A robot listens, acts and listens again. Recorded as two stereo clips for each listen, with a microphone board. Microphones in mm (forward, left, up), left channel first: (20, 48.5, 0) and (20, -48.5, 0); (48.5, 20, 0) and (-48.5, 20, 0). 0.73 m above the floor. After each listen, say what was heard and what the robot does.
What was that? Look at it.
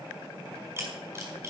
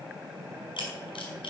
The camera shutter: 25° right. Turn 25° right.
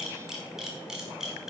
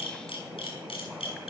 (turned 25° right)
Facing the camera shutter, over 4 m away.